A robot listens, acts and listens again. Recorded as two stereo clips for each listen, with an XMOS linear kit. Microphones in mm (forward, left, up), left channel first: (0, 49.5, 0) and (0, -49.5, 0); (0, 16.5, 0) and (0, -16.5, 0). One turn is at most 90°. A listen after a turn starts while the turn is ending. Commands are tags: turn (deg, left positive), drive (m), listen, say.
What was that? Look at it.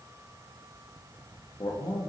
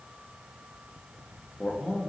<turn deg="45"/>
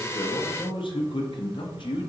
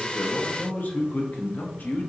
<turn deg="80"/>
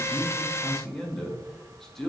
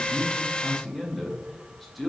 <say>Facing the man speaking, under 1 m away.</say>